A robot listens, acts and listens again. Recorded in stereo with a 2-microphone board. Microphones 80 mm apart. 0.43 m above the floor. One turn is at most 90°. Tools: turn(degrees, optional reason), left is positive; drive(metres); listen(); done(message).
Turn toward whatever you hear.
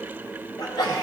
turn(degrees=60, reason="The sneeze: about 60° left or 120° left.")
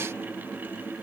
listen()
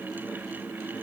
done("I heard a sneeze, but can't make it out now. It was about straight ahead or 60° left.")